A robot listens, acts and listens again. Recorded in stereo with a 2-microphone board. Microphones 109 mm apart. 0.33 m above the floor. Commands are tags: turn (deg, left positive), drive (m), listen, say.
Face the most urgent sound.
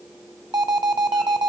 <turn deg="-40"/>
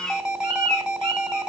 <turn deg="-10"/>
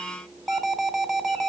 <say>Facing the alarm, 1 to 2 m away.</say>